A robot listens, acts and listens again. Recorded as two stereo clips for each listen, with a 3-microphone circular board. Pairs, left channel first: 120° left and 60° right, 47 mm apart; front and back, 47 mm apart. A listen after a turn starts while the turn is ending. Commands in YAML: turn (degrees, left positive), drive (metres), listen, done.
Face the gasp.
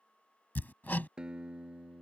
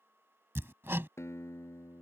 listen: true
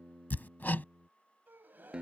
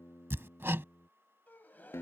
turn: -35
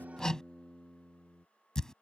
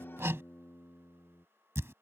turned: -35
done: "Facing where the gasp came from. I can't hear it now."